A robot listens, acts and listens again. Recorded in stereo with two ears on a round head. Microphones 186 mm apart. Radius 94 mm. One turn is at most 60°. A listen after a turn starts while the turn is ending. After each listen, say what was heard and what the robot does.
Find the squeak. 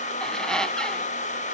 Turn 30° left.
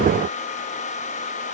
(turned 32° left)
Keep listening.
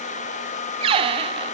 So it is at 30° right. Turn 30° right.
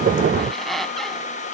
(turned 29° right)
Found it: a squeak, straight ahead.